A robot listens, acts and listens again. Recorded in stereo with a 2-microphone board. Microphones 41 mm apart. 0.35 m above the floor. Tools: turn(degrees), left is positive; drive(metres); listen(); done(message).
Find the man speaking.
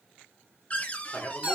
turn(degrees=30)
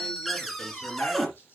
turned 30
listen()
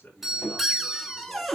turn(degrees=45)
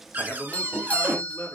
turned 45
turn(degrees=115)
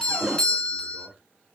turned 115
listen()
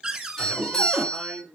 done("Found it: a man speaking, straight ahead.")